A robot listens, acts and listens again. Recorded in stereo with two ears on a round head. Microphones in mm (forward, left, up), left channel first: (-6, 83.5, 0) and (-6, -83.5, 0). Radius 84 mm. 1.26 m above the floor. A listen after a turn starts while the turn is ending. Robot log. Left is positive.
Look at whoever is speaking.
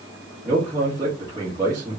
note: The man speaking: about 20° right or 160° right.
cmd yaw -20
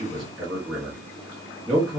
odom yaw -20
end: Facing the man speaking, 1 to 2 m away.